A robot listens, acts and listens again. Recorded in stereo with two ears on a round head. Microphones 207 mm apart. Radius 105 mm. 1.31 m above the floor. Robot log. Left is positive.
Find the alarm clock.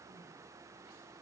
cmd idle
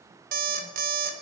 note: The alarm clock: about 40° right or 140° right.
cmd yaw -40
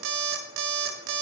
note: So it is at 95° right.
cmd yaw -95
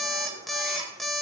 end: Facing the alarm clock.